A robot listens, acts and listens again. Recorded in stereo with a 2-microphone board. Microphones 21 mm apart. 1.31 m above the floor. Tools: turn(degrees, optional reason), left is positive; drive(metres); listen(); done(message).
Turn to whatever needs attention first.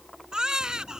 turn(degrees=-40, reason="The baby crying: about 40° right or 140° right.")
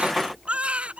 turn(degrees=-100, reason="So it is at 100° right.")
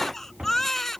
turn(degrees=20, reason="The baby crying is now 20° left.")
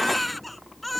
done("Facing the baby crying.")